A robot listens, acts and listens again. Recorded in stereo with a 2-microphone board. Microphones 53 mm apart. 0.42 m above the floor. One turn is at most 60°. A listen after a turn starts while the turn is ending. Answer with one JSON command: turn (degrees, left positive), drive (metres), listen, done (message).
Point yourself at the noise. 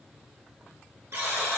{"turn": -55}
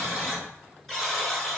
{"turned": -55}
{"done": "Found it: a buzzer, straight ahead, 1 to 2 m away."}